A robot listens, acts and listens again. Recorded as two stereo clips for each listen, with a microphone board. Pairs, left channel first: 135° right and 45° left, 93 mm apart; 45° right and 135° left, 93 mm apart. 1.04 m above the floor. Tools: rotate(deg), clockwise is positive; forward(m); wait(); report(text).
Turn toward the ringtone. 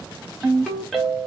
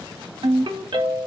rotate(-135)
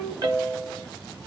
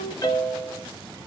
report("Facing the ringtone.")